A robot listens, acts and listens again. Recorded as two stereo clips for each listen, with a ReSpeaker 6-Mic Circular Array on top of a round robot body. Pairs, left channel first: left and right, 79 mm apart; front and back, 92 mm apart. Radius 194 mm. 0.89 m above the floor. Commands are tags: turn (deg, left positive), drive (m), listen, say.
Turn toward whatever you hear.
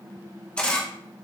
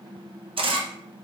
<turn deg="170"/>
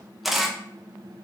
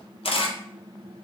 <say>Found it: a camera shutter, straight ahead, under 1 m away.</say>